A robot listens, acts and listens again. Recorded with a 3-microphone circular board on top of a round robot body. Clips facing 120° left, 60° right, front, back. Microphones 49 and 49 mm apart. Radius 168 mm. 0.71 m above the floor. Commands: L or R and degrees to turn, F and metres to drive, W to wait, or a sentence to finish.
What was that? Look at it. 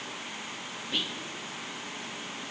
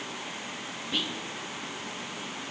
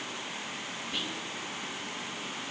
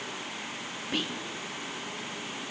R155
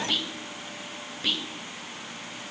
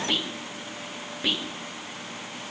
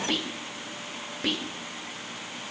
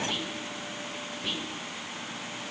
L15
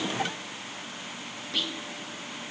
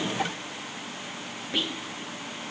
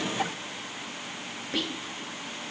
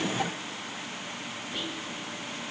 Found it: whispering, straight ahead.